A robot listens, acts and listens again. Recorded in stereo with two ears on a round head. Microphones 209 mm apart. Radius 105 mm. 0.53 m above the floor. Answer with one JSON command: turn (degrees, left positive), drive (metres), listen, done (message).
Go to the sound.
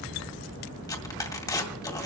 {"turn": 15}
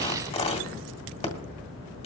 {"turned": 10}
{"turn": 155}
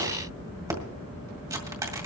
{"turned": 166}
{"turn": -15}
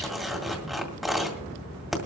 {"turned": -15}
{"drive": 1.0}
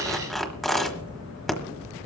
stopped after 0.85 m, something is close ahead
{"done": "Arrived at the tearing paper, straight ahead."}